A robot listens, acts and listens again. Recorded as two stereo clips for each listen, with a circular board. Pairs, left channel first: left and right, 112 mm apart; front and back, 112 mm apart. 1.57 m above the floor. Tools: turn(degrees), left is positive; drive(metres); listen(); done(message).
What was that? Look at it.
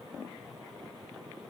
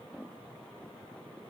listen()
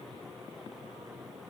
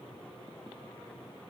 listen()
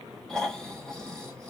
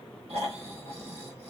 turn(degrees=175)
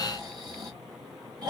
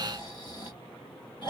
turn(degrees=-40)
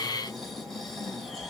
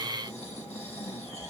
done("Found it: snoring, straight ahead.")